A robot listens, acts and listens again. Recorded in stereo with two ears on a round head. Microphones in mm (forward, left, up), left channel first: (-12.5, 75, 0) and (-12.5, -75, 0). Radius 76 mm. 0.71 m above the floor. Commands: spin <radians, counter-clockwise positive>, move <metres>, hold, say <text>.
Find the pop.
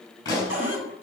spin 0.35
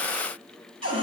hold
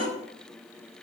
say I heard a pop, but can't make it out now. It was about straight ahead or 140° left.